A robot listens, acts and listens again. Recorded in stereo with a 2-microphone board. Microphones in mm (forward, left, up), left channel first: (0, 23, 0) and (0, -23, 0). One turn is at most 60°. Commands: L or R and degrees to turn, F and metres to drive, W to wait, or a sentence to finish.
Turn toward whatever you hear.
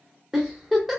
R30
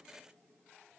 W
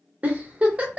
R60
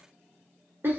R60
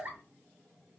R60
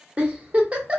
R35
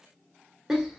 R10
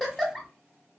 Found it: a giggle, straight ahead, under 1 m away.